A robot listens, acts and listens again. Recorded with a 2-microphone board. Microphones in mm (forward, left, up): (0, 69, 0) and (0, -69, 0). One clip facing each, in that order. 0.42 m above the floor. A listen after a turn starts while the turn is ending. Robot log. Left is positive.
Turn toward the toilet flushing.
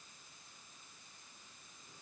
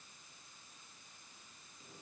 cmd idle
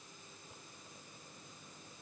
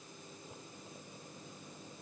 cmd idle
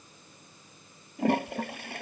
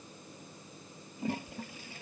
cmd yaw +90
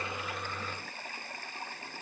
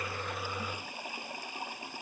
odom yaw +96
note: So it is at 15° right.
cmd yaw -15
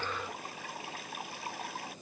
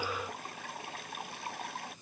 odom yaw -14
end: Found it: a toilet flushing, straight ahead.